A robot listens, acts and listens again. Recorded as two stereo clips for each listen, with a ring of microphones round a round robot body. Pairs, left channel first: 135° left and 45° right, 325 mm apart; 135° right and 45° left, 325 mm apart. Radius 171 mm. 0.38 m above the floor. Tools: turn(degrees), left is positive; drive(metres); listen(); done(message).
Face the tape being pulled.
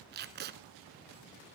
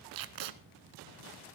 turn(degrees=15)
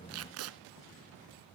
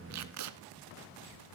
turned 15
done("Facing the tape being pulled, 1 to 2 m away.")